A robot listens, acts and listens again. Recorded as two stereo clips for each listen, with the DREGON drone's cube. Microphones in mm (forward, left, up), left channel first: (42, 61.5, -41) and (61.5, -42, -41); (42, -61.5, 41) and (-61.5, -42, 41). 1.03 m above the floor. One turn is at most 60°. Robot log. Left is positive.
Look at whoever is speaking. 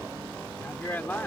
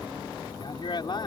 note: The man speaking: 30° left.
cmd yaw +30
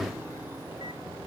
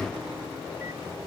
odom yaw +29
cmd idle
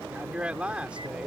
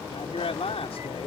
end: Facing the man speaking.